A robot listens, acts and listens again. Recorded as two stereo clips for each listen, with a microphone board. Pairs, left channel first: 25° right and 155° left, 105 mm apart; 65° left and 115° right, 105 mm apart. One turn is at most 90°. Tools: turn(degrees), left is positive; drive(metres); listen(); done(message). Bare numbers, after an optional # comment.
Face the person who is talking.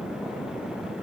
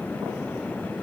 listen()
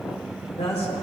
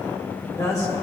done("Found it: a woman speaking, straight ahead.")